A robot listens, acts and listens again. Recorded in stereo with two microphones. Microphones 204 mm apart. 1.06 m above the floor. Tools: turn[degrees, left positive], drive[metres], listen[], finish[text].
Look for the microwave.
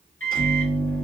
Action: turn[90]
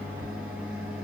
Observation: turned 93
Action: finish[Found it: a microwave, straight ahead.]